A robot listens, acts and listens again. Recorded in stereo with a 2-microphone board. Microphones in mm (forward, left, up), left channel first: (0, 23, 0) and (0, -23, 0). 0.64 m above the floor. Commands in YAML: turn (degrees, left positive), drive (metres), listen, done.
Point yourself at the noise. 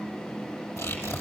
turn: 90
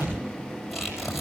done: "Found it: tearing paper, straight ahead, over 4 m away."